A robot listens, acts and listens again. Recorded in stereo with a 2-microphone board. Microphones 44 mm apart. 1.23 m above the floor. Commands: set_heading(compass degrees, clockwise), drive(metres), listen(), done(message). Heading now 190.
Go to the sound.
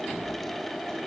listen()
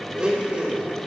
set_heading(215)
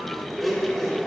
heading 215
drive(1.0)
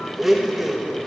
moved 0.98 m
set_heading(225)
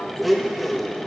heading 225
drive(1.0)
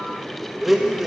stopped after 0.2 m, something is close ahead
done("I am next to the blender.")